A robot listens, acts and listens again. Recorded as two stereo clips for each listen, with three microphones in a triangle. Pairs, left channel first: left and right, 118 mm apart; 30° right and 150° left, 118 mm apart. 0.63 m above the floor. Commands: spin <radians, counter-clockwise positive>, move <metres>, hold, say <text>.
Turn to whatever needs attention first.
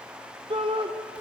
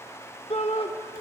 spin -0.96
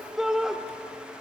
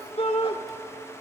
say Found it: a shout, straight ahead.